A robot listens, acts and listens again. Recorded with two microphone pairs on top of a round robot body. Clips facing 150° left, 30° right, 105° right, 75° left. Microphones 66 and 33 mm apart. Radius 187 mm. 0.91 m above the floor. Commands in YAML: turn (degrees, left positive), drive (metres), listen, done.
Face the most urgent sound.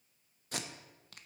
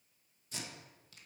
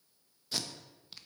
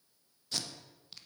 listen: true
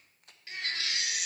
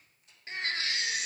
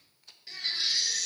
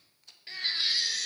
turn: 25
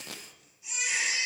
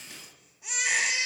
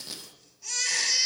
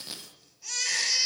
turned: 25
done: "Found it: a baby crying, straight ahead."